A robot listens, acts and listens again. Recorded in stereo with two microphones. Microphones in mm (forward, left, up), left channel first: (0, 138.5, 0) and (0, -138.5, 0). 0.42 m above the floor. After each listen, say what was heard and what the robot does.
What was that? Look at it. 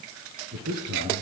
The man speaking: about 65° right or 115° right. Turn 65° right.
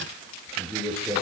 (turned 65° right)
Found it: a man speaking, straight ahead, over 4 m away.